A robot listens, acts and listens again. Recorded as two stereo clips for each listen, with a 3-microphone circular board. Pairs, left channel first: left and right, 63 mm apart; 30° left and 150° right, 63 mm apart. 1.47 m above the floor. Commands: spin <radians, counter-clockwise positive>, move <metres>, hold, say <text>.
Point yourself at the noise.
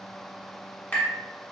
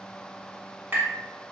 spin 2.79
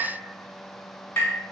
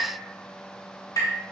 spin 0.61
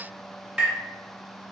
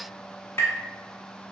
spin -0.26
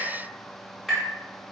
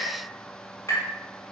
say Found it: tapping, straight ahead, 1 to 2 m away.